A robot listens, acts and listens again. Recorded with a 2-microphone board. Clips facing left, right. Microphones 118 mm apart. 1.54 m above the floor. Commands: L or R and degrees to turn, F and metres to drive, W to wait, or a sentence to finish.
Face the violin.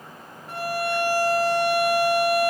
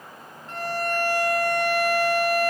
L30
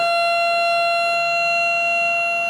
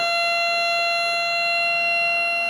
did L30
L140
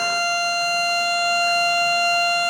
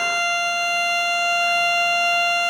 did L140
L15
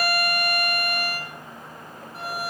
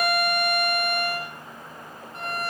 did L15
Facing the violin.